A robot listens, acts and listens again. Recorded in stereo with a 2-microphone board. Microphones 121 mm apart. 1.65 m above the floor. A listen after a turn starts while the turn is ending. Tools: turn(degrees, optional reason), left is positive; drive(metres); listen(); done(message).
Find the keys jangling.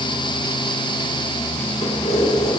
turn(degrees=70, reason="The keys jangling: about 70° left or 110° left.")
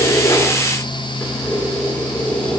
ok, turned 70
turn(degrees=15, reason="So it is at 15° left.")
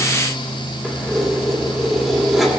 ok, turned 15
done("Found it: keys jangling, straight ahead, 2 to 4 m away.")